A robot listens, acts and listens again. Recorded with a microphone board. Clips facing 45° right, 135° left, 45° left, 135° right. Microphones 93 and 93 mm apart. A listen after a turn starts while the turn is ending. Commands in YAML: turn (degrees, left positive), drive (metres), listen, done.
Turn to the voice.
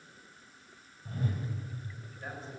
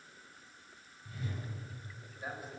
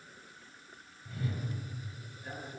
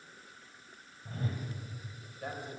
turn: -145
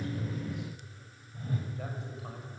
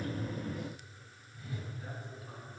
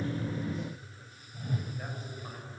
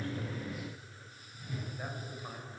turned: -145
turn: -55
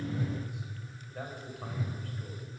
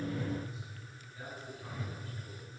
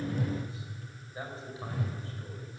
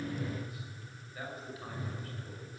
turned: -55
turn: -20
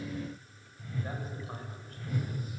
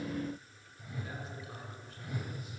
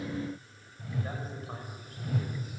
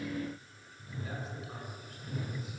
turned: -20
listen: true
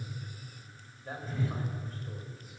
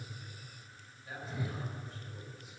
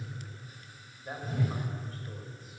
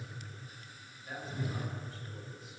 done: "Facing the man speaking."